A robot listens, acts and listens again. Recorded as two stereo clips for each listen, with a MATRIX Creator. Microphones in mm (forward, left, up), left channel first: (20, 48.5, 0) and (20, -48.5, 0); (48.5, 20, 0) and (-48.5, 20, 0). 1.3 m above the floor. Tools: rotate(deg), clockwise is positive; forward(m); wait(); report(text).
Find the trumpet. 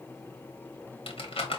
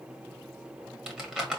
wait()
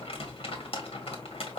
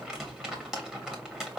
wait()
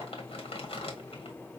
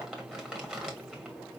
report("I can't make out a trumpet to turn to.")